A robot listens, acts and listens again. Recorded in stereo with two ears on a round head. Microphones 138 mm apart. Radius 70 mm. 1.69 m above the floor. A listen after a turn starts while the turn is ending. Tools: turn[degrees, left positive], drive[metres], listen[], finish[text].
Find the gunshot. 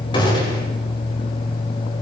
Thought: The gunshot: about 30° left or 150° left.
Action: turn[30]
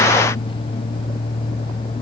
Action: listen[]
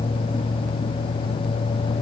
Action: finish[I heard a gunshot, but can't make it out now. It was about straight ahead or 120° left.]